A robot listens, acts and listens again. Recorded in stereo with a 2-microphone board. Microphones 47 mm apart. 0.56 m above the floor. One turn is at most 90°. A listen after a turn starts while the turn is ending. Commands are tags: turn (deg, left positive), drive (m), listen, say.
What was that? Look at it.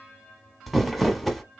<turn deg="30"/>
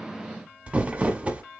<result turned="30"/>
<turn deg="-30"/>
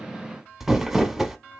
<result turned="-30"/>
<turn deg="-10"/>
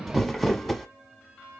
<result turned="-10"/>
<say>Found it: crumpling, straight ahead.</say>